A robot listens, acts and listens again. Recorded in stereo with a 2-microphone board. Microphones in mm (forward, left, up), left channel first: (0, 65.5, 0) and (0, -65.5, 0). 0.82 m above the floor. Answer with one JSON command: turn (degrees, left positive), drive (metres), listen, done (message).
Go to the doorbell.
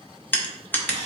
{"listen": true}
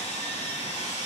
{"listen": true}
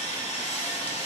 {"done": "I can't make out a doorbell, only sawing and crushing."}